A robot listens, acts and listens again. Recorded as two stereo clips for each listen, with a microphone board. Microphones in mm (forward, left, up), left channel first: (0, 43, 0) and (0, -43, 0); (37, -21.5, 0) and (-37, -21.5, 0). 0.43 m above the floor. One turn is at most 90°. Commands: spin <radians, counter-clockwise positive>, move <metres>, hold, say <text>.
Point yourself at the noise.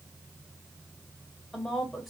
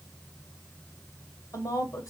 say Facing the woman speaking, 2 to 4 m away.